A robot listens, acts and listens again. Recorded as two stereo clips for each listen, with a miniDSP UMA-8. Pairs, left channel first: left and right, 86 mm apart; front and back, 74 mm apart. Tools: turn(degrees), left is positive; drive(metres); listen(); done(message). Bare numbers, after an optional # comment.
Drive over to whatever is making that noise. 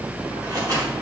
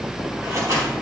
# The scissors: 135° right.
turn(-135)
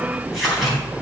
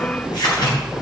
drive(1.0)
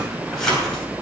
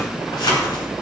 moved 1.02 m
drive(1.0)
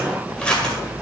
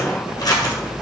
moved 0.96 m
# The scissors is now 15° left.
turn(15)
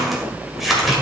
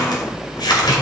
drive(1.0)
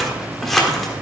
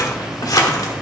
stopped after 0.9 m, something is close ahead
done("I am next to the scissors.")